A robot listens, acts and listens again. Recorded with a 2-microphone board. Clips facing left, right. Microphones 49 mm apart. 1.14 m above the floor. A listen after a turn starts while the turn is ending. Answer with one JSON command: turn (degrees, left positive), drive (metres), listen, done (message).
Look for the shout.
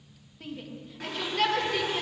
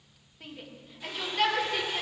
{"turn": -30}
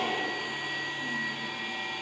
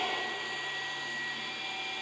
{"listen": true}
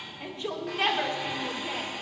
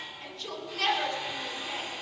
{"turn": 25}
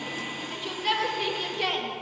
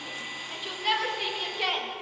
{"done": "Found it: a shout, straight ahead, 1 to 2 m away."}